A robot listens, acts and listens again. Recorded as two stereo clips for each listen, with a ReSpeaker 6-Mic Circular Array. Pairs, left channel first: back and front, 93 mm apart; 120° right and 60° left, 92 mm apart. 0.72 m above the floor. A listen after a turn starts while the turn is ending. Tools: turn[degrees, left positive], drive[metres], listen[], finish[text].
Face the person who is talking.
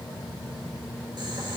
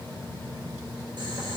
Action: listen[]
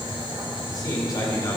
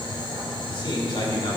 Thought: The man speaking: 135° right.
Action: turn[-135]
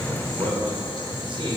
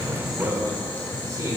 Thought: The man speaking is now 10° left.
Action: turn[10]
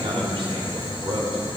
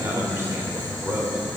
Action: finish[Found it: a man speaking, straight ahead.]